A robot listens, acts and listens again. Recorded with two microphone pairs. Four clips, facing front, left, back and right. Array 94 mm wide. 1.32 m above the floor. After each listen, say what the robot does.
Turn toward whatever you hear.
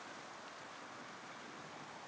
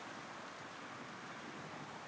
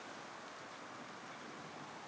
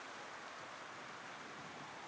Keep listening.
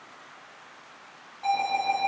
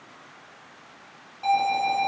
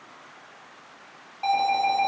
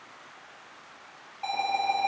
Turn 175° right.
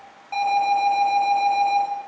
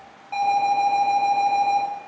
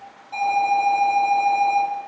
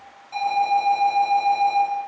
Turn 20° left.
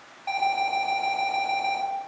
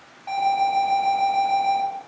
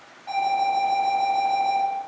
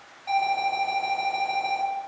Facing the alarm.